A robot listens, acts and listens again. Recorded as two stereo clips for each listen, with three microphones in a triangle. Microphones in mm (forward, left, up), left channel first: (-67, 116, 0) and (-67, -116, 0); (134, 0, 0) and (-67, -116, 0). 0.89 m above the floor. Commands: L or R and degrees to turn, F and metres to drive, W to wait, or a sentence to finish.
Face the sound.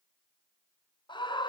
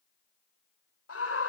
L20
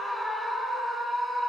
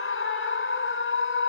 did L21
Facing the scream.